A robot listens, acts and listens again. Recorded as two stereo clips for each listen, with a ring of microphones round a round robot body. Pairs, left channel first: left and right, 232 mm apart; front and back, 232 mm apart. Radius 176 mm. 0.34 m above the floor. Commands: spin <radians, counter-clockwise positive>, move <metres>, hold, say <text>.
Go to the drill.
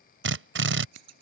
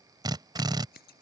spin -1.83
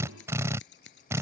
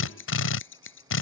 spin -0.17
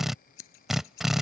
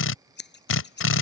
move 1.0
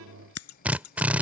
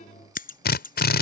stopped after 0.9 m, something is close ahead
spin -0.17
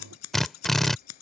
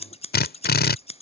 say Arrived at the drill, straight ahead.